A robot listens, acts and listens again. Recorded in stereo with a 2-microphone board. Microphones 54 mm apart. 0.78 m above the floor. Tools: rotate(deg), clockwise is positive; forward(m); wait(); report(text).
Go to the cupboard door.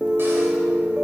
wait()
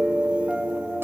wait()
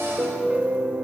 report("I can't make out a cupboard door, only a piano.")